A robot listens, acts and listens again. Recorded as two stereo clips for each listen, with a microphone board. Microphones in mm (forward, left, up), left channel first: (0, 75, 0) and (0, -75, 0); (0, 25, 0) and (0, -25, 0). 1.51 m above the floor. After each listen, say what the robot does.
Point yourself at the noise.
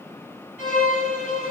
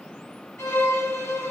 Turn 65° left.
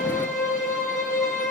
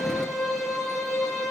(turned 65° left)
Facing the violin.